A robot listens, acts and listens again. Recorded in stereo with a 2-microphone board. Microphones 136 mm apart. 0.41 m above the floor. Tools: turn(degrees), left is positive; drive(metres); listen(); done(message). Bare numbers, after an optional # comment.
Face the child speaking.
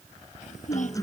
# The child speaking: about 65° left or 115° left.
turn(65)
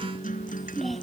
done("Found it: a child speaking, straight ahead.")